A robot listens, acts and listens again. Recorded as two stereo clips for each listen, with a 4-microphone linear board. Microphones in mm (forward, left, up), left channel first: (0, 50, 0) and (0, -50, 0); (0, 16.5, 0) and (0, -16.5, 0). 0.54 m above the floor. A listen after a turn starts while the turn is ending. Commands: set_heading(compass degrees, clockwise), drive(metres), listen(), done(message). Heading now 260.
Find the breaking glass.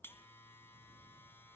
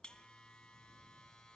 listen()
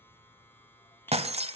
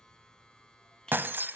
set_heading(335)
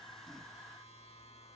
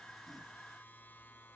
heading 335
listen()
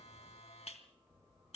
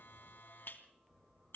done("I heard breaking glass, but can't make it out now. It was about straight ahead or 30° right.")